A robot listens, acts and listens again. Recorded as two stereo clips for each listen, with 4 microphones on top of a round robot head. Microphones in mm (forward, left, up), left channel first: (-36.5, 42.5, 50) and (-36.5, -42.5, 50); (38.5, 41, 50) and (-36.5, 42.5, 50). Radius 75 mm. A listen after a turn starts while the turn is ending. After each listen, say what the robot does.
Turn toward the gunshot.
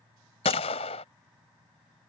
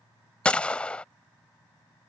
Turn 75° left.
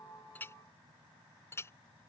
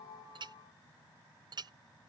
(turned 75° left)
I heard a gunshot from this way, but can't make it out now.